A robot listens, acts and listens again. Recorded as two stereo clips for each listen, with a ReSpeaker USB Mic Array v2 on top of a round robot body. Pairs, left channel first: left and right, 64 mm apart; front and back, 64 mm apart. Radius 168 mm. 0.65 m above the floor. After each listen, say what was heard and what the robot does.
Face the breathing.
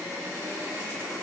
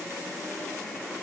Keep listening.
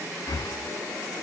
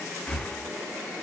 The breathing: 75° left. Turn 75° left.
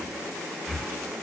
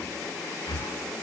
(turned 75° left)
Found it: breathing, straight ahead.